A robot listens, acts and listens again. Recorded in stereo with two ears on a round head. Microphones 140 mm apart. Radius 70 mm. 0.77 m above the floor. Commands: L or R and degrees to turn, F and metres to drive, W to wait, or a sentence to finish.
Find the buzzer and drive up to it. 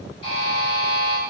L35
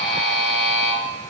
F1.0
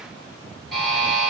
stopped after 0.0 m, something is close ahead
Something is in my way. I am facing the buzzer but have not reached it.